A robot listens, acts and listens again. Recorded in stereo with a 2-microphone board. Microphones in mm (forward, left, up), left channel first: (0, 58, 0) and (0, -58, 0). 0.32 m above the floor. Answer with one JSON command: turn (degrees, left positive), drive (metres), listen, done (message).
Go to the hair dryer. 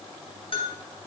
{"listen": true}
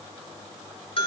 {"listen": true}
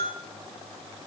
{"done": "I can't make out a hair dryer to turn to."}